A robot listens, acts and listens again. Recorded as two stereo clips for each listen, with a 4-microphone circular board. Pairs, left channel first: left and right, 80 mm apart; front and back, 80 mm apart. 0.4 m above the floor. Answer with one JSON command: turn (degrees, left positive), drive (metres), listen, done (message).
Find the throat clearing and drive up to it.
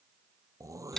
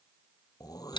{"turn": -40}
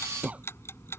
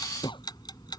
{"turn": -15}
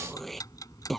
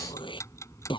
{"drive": 1.0}
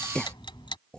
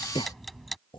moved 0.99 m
{"turn": 10}
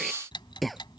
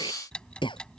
{"drive": 1.0}
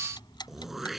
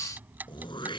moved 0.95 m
{"drive": 1.0}
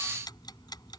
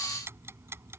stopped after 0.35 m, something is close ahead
{"listen": true}
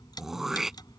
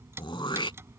{"done": "I am next to the throat clearing."}